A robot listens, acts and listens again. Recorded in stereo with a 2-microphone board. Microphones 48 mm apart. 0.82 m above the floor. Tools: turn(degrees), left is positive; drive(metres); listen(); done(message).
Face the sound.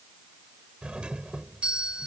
turn(degrees=-20)
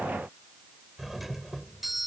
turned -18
done("Facing the doorbell.")